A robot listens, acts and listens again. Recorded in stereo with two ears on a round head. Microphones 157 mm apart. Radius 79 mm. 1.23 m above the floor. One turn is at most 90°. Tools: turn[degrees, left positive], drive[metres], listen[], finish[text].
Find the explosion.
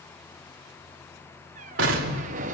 Action: turn[-90]
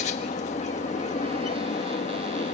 Action: finish[Facing where the explosion came from. I can't hear it now.]